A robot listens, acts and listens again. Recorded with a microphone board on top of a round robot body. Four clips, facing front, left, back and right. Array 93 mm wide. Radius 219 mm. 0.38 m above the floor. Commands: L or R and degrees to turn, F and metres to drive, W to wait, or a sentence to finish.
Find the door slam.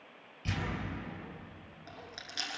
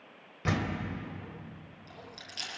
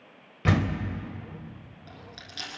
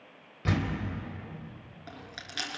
L170
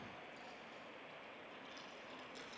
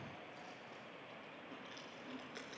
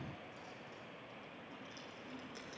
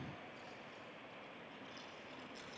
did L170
Facing where the door slam came from. I can't hear it now.